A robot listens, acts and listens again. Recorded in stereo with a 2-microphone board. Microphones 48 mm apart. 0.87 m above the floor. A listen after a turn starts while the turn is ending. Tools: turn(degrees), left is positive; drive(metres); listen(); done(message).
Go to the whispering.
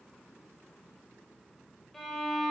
listen()
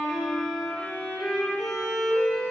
listen()
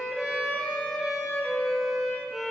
done("I can't make out whispering, only a violin.")